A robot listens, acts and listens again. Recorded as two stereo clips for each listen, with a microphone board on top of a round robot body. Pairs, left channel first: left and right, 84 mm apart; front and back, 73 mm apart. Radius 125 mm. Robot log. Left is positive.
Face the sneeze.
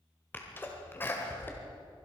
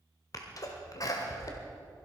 note: The sneeze: 25° left.
cmd yaw +25
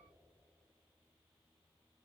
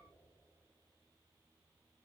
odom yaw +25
end: Facing where the sneeze came from. I can't hear it now.